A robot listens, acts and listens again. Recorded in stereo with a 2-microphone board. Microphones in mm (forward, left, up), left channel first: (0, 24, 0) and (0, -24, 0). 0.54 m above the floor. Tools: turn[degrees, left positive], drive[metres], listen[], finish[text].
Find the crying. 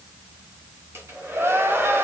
Thought: The crying: about 60° right or 120° right.
Action: turn[-60]
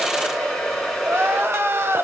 Thought: So it is at 60° right.
Action: turn[-60]
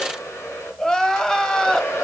Thought: The crying is now 10° left.
Action: turn[10]
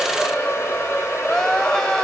Thought: The crying is now 10° left.
Action: turn[10]
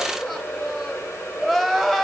Action: finish[Facing the crying, 1 to 2 m away.]